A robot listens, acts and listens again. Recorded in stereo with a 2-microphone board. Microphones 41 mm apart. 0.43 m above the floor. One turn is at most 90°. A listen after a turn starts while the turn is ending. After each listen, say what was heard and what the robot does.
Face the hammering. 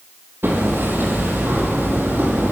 The hammering: about 65° right or 115° right. Turn 65° right.
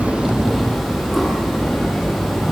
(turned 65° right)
Facing the hammering.